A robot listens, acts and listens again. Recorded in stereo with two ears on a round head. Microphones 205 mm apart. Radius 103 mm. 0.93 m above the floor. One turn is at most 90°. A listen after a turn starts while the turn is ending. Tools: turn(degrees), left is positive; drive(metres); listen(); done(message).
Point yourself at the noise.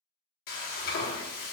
turn(degrees=40)
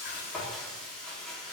done("Facing the frying, under 1 m away.")